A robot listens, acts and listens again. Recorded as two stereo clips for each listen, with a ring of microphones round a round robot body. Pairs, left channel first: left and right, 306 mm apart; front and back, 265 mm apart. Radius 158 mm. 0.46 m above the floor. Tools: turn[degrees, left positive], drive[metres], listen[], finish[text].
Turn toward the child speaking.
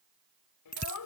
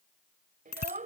Thought: The child speaking: 120° left.
Action: turn[120]
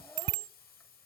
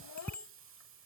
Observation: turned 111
Thought: Nothing new. It was at 10° left.
Action: turn[10]
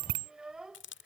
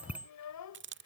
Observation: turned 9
Action: finish[Facing the child speaking.]